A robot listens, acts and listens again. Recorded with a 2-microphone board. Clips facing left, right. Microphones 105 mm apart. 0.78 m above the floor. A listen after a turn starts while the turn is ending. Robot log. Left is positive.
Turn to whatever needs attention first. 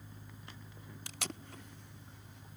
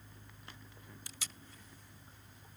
cmd idle
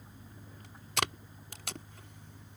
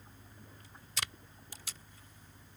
cmd idle
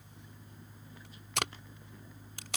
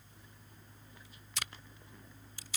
end: I can't make out anything urgent, only tape being pulled.